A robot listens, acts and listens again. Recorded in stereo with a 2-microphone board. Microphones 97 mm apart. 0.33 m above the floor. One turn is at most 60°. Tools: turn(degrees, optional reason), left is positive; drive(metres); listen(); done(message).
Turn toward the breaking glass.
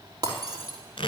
turn(degrees=-45, reason="The breaking glass: about 45° right or 135° right.")
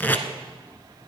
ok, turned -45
listen()
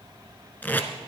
done("I heard breaking glass, but can't make it out now. It was about straight ahead or 90° right.")